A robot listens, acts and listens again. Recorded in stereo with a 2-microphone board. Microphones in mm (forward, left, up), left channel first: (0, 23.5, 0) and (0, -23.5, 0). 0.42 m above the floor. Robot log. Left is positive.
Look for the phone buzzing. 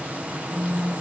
cmd yaw +30
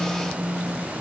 note: So it is at 15° right.
cmd yaw -15
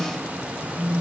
end: Found it: a phone buzzing, straight ahead.